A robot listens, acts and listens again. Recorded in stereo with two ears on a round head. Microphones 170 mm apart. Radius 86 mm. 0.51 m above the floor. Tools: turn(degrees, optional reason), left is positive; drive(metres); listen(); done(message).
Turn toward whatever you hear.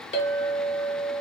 turn(degrees=30, reason="The clink: about 30° left or 150° left.")
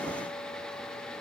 listen()
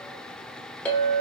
done("Found it: a clink, straight ahead.")